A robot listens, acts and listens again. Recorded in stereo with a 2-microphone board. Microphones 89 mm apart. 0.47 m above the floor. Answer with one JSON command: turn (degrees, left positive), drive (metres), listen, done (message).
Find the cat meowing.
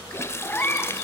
{"turn": 20}
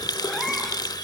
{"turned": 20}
{"listen": true}
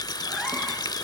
{"listen": true}
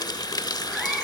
{"done": "I heard a cat meowing, but can't make it out now. It was about straight ahead or 140° left."}